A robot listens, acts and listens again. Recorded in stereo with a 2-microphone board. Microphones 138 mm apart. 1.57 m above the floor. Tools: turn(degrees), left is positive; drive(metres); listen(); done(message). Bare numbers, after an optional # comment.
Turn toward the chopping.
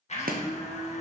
turn(-90)
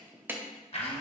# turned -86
# So it is at 15° right.
turn(-15)
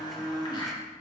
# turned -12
listen()
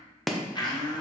done("Found it: chopping, straight ahead, under 1 m away.")